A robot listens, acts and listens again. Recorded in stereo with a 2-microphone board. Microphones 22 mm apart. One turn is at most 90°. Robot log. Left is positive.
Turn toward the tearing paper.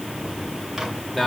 cmd idle
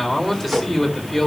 cmd idle
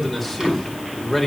end: I can't make out tearing paper, only a man speaking and a microwave.